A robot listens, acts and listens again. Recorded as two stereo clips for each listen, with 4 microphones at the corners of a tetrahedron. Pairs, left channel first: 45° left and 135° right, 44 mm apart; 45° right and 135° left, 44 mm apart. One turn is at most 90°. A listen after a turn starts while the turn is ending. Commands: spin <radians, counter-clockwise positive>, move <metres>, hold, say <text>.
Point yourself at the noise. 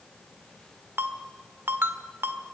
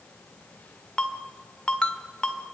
spin -1.57
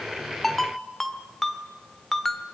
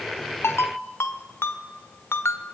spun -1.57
spin -0.61
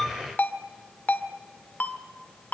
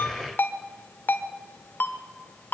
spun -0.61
say Facing the ringtone.